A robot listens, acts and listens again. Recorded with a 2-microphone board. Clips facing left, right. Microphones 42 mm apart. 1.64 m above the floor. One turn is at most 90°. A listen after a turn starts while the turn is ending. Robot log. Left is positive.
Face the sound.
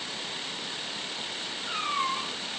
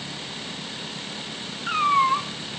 note: The cat meowing: about 60° right or 120° right.
cmd yaw -60
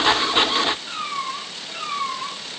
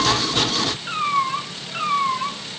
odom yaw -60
note: So it is at 25° right.
cmd yaw -25
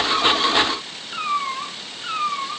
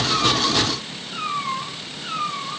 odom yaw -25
note: The cat meowing is now 20° left.
cmd yaw +20
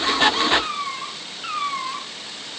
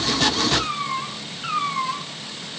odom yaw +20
end: Found it: a cat meowing, straight ahead, 2 to 4 m away.